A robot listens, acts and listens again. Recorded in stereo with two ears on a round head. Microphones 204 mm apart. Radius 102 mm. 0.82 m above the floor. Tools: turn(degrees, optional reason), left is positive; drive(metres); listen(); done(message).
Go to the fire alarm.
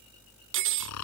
listen()
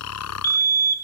turn(degrees=40, reason="The fire alarm: about 40° left or 140° left.")
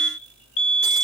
turn(degrees=90, reason="So it is at 90° left.")
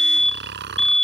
drive(metres=1.0)
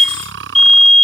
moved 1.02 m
drive(metres=1.0)
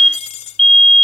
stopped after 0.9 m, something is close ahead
done("Arrived at the fire alarm, straight ahead.")